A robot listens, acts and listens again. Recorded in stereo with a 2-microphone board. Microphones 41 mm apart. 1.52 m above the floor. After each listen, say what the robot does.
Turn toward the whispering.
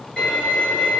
Keep listening.
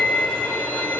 Keep listening.
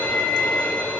I can't make out whispering to turn to.